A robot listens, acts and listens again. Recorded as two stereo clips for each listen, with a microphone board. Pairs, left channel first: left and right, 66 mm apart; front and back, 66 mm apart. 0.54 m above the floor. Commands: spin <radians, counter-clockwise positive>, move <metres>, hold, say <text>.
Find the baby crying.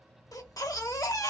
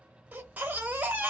spin 2.01
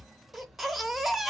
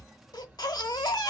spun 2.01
say Facing the baby crying.